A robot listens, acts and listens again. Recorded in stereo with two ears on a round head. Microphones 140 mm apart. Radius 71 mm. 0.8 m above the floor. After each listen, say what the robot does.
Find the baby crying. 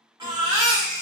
Turn 25° right.
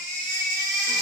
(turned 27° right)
Turn 125° right.
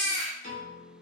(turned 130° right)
Found it: a baby crying, straight ahead.